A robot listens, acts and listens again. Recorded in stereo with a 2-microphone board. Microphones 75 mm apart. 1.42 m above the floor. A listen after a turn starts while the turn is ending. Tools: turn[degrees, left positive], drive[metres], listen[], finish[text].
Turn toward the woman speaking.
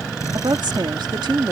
Action: turn[-90]
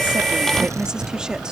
Action: listen[]
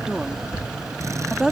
Thought: The woman speaking is now 10° right.
Action: turn[-10]
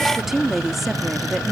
Action: finish[Found it: a woman speaking, straight ahead.]